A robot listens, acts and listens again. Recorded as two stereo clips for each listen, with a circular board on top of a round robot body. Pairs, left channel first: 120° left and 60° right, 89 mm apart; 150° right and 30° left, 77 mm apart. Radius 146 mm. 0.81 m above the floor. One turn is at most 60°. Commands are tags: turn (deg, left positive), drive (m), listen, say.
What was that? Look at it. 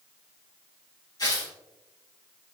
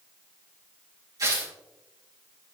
<turn deg="60"/>
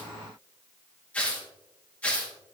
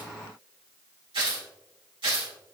<turn deg="45"/>
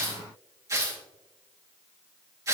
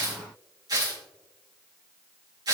<say>Found it: tearing paper, straight ahead, 2 to 4 m away.</say>